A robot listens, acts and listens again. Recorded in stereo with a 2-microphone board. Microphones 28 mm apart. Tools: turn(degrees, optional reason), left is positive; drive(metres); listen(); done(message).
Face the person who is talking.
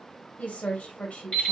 turn(degrees=65, reason="The woman speaking: about 65° left or 115° left.")
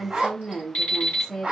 done("Found it: a woman speaking, straight ahead.")